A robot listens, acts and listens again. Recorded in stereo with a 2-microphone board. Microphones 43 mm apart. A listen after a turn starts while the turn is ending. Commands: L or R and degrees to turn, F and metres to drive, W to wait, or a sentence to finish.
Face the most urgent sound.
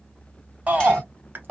R40
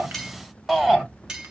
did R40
Found it: a shout, straight ahead, 1 to 2 m away.